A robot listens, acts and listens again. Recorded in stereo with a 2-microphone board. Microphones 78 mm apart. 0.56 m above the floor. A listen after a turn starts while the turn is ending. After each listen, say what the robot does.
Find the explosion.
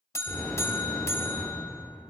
Turn 30° left.
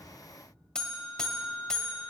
Keep listening.
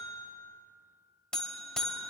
I heard an explosion, but can't make it out now. It was about 20° right or 140° left.